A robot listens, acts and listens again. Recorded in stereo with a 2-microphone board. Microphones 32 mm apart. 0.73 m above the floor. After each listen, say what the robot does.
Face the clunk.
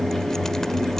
Keep listening.
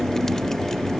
Keep listening.
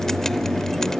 I can't make out a clunk to turn to.